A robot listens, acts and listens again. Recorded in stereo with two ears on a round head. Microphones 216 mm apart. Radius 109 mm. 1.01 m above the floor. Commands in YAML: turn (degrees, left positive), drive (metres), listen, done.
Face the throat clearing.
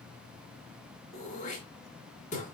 turn: 30
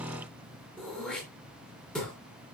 done: "Facing the throat clearing."